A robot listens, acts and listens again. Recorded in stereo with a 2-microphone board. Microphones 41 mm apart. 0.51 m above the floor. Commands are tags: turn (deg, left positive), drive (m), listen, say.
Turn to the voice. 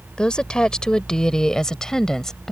<turn deg="30"/>
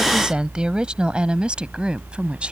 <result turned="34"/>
<turn deg="-25"/>
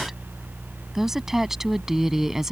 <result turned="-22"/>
<turn deg="-10"/>
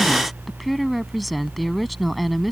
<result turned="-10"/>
<say>Facing the woman speaking.</say>